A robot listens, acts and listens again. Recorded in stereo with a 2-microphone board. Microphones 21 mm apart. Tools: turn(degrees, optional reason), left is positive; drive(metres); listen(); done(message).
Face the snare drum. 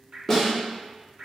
turn(degrees=30)
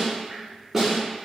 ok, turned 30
turn(degrees=-20, reason="So it is at 20° right.")
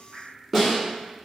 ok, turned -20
done("Facing the snare drum, 1 to 2 m away.")